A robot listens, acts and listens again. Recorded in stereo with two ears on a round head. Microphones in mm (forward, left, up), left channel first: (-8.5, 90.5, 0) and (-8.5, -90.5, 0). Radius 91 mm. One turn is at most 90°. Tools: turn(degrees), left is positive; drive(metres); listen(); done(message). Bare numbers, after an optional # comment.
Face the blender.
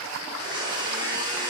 # The blender: about 25° right or 155° right.
turn(-25)
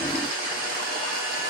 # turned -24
# So it is at 135° right.
turn(-90)
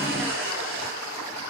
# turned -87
# The blender is now 45° right.
turn(-45)
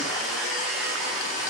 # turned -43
done("Found it: a blender, straight ahead, 2 to 4 m away.")